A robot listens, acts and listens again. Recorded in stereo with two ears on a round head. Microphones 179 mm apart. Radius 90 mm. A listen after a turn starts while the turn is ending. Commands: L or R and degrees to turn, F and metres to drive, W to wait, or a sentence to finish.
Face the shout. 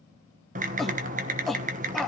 L30
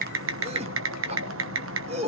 R30
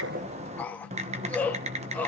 L10
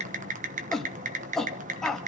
Found it: a shout, straight ahead, 1 to 2 m away.